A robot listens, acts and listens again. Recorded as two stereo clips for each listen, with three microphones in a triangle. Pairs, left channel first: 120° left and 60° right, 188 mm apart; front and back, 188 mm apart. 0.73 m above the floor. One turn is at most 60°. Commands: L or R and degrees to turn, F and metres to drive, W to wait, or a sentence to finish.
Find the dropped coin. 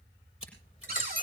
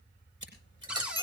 L60
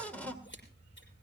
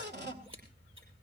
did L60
L50
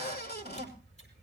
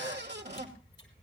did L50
I heard a dropped coin from this way, but can't make it out now.